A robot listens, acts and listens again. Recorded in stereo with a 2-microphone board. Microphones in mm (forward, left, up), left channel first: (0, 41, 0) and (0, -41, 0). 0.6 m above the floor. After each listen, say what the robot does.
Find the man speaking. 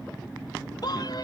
Turn 55° left.
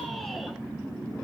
Keep listening.
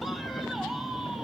Facing the man speaking, 2 to 4 m away.